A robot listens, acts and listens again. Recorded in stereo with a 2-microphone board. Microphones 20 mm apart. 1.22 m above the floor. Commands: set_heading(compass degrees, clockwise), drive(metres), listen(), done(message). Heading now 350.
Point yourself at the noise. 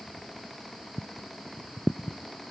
listen()
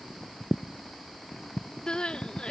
set_heading(300)
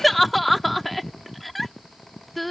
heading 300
done("Facing the crying.")